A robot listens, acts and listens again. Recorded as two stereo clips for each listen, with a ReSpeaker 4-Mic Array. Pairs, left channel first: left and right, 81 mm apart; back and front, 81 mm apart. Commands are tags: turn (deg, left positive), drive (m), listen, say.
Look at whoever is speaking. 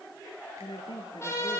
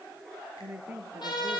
<turn deg="70"/>
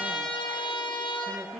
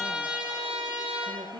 <listen/>
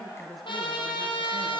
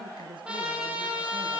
<listen/>
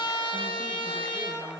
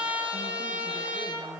<say>I heard a woman speaking from this way, but can't make it out now.</say>